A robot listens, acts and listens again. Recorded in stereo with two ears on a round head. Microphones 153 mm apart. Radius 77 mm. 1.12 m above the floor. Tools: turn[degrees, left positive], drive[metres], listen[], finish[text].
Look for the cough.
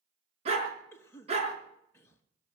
Action: turn[30]
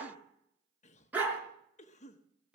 Thought: So it is at 135° left.
Action: turn[135]
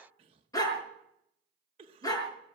Thought: The cough is now 30° right.
Action: turn[-30]
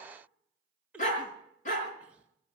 Action: finish[Facing the cough, 1 to 2 m away.]